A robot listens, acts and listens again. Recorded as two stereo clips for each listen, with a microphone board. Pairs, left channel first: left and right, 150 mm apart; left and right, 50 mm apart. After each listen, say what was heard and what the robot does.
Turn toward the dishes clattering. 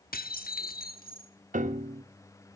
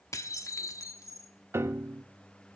Turn 90° left.
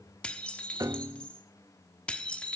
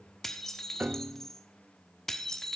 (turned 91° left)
Facing the dishes clattering, 1 to 2 m away.